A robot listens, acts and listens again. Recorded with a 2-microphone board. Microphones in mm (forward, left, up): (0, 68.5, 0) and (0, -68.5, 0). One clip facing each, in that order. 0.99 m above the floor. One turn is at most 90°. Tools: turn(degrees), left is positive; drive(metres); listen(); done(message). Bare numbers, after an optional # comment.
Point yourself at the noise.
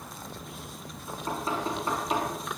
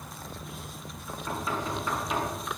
# The knocking: about 35° left or 145° left.
turn(35)
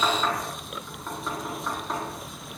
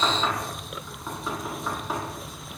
done("Found it: knocking, straight ahead, over 4 m away.")